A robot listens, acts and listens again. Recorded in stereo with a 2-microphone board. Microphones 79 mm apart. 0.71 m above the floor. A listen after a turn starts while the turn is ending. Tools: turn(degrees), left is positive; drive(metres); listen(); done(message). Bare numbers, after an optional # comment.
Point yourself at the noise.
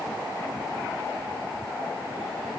listen()
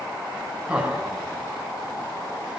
turn(-30)
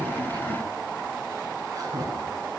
# So it is at 135° right.
turn(-135)
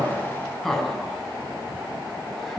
done("Facing the laughter, over 4 m away.")